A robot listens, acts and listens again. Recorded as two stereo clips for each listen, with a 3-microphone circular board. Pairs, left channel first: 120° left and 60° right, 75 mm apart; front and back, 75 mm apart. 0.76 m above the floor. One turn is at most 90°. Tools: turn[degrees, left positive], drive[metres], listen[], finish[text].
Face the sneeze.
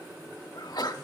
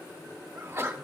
Thought: The sneeze: 130° left.
Action: turn[90]
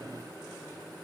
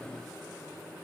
Thought: Nothing new. It was at 40° left.
Action: turn[40]
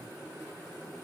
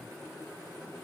Action: finish[I heard a sneeze from this way, but can't make it out now.]